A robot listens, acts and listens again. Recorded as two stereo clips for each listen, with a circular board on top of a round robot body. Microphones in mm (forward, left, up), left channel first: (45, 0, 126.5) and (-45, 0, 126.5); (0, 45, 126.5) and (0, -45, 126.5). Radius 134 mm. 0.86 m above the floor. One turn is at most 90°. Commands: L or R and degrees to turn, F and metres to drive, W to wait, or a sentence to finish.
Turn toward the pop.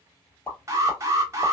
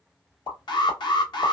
L65
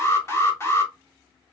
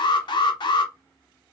Facing where the pop came from. I can't hear it now.